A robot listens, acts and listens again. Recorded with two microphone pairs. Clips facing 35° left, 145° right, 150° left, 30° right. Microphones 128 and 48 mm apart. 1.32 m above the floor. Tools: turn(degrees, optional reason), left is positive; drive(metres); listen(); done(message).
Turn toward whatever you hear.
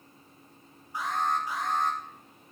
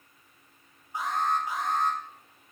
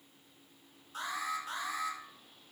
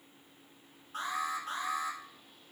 turn(degrees=-75, reason="The alarm: 75° right.")
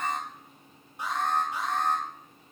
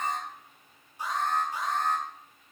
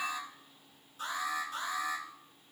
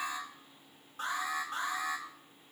turn(degrees=10, reason="The alarm is now 10° left.")
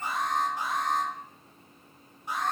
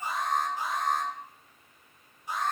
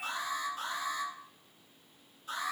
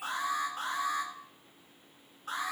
done("Facing the alarm.")